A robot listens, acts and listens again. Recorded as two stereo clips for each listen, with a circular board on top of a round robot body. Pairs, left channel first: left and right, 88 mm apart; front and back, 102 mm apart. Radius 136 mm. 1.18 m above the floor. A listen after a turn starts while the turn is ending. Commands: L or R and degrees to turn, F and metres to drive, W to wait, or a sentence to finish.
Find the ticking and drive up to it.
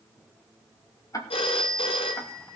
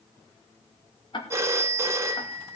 L40
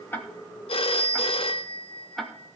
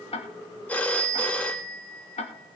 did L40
F1.0
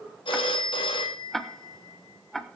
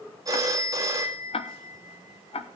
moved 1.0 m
F1.0
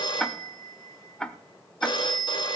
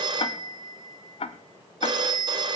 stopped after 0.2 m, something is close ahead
L10
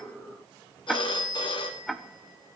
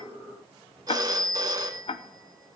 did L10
I am next to the ticking.